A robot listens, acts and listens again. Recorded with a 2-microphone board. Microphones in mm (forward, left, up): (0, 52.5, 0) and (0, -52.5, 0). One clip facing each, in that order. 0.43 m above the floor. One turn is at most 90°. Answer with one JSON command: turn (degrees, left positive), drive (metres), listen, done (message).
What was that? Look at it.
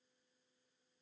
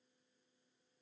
{"listen": true}
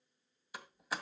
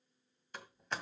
{"turn": 30}
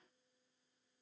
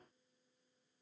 {"listen": true}
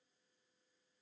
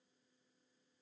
{"done": "I heard a door slam, but can't make it out now. It was about 25° right or 145° left."}